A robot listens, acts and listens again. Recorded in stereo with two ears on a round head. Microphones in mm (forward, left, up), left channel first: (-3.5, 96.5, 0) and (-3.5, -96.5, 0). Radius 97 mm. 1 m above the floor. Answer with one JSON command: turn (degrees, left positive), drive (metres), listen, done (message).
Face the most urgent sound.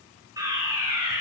{"turn": -15}
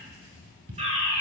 {"turn": -150}
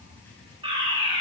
{"turn": -30}
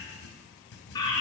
{"turn": 20}
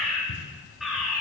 {"done": "Found it: a fire alarm, straight ahead."}